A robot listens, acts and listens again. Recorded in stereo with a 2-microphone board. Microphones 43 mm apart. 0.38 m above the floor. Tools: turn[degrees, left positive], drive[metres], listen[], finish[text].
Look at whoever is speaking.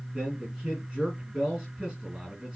Thought: The man speaking: about 15° right or 165° right.
Action: turn[-15]
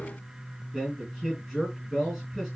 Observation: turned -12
Action: finish[Found it: a man speaking, straight ahead, 2 to 4 m away.]